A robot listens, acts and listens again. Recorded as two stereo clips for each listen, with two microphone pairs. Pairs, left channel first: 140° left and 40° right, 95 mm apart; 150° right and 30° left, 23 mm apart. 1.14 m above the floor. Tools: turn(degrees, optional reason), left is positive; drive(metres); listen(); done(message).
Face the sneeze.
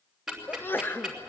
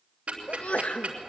turn(degrees=-150, reason="The sneeze: 150° right.")
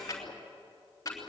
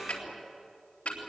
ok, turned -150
done("Facing where the sneeze came from. I can't hear it now.")